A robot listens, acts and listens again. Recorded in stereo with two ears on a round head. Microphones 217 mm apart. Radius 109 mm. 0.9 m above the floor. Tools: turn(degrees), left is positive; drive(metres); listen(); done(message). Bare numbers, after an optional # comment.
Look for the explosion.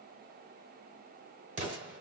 # The explosion: about 30° right or 150° right.
turn(-30)
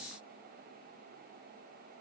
listen()
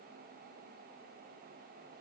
done("I heard an explosion, but can't make it out now. It was about straight ahead or 120° right.")